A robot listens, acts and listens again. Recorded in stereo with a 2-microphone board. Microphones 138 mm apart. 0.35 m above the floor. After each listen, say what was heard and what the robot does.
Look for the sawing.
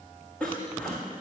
Turn 30° left.
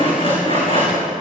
So it is at 140° left. Turn 140° left.
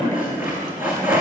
The sawing is now 15° right. Turn 15° right.
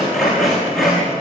Found it: sawing, straight ahead, over 4 m away.